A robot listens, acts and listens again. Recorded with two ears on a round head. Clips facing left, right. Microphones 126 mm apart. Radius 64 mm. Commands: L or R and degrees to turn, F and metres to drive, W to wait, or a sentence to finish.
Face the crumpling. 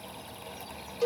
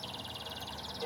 W
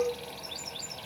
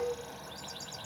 W
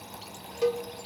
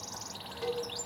I can't make out crumpling, only a cowbell.